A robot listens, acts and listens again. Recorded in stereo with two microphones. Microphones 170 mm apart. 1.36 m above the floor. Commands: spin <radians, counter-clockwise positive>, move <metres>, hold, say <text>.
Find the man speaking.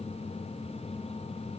hold
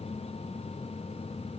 hold
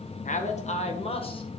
spin 0.61
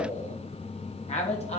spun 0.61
spin 0.61
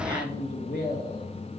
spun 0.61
spin 2.01
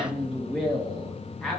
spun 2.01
say Found it: a man speaking, straight ahead, 1 to 2 m away.